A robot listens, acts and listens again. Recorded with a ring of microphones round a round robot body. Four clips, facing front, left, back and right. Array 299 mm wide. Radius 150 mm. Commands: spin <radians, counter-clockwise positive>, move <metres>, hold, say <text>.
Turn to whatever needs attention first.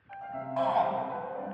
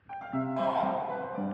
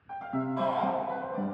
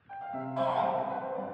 say Found it: a shout, straight ahead.